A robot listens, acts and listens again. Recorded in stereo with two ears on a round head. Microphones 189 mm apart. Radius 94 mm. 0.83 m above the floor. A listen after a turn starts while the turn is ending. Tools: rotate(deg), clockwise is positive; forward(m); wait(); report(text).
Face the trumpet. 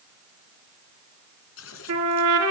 rotate(90)
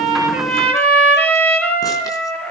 report("Found it: a trumpet, straight ahead.")